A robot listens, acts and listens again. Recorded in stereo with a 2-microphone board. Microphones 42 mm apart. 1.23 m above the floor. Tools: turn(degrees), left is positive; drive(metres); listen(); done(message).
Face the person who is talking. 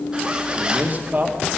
turn(degrees=-35)
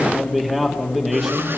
done("Facing the man speaking.")